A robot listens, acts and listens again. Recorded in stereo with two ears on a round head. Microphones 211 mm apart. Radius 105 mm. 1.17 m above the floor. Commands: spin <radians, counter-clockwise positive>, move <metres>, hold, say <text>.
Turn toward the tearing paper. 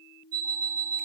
hold
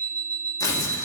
spin 0.26
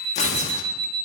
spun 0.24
spin 2.62
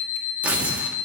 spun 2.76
say Found it: tearing paper, straight ahead.